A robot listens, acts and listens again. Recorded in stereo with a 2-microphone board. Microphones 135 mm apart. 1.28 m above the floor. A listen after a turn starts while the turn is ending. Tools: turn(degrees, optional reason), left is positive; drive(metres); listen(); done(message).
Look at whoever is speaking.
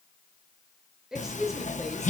turn(degrees=30)
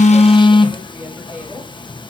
turn(degrees=-30)
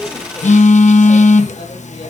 listen()
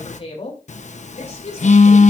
turn(degrees=50, reason="So it is at 50° left.")
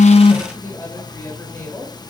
turn(degrees=20, reason="The woman speaking is now 20° left.")
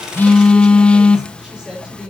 done("Found it: a woman speaking, straight ahead.")